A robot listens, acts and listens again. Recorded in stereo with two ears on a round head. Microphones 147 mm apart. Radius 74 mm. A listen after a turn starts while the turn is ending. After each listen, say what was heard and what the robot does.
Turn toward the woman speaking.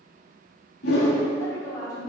The woman speaking: about 25° left or 155° left. Turn 25° left.
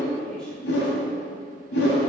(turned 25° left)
Keep listening.
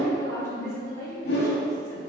The woman speaking: about 20° left or 160° left. Turn 20° left.
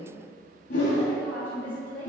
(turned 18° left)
Turn 30° left.
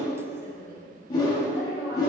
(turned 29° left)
So it is at 15° right. Turn 15° right.
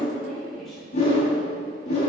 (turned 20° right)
Found it: a woman speaking, straight ahead, 2 to 4 m away.